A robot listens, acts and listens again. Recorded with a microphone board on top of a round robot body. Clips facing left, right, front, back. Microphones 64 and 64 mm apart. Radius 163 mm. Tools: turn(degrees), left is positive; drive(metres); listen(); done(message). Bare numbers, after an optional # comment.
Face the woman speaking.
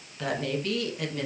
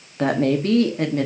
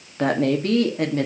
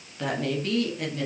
# The woman speaking: 40° right.
turn(-40)
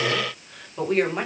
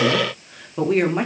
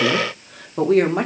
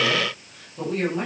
done("Found it: a woman speaking, straight ahead, 2 to 4 m away.")